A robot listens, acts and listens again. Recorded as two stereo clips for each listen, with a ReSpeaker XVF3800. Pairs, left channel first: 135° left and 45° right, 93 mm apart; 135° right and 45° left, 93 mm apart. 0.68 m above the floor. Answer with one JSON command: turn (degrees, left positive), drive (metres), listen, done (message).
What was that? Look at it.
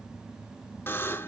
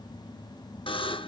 {"turn": -160}
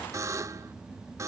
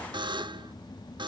{"turn": 10}
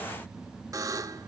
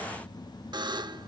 {"done": "Facing the buzzer, under 1 m away."}